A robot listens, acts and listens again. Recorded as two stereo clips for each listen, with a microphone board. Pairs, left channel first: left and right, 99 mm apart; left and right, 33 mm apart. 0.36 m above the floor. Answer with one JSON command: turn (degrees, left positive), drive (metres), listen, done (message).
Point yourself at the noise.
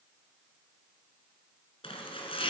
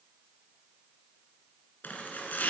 {"turn": 70}
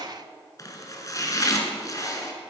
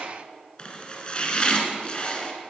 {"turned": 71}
{"turn": 35}
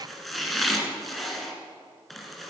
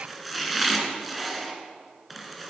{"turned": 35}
{"done": "Found it: chopping, straight ahead."}